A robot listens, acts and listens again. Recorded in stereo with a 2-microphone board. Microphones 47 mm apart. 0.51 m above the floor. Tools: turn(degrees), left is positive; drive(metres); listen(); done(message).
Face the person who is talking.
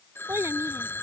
turn(degrees=-90)
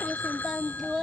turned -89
turn(degrees=-10)
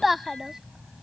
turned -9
turn(degrees=-10)
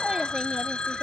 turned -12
listen()
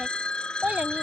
turn(degrees=-30)
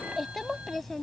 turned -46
done("Found it: a child speaking, straight ahead.")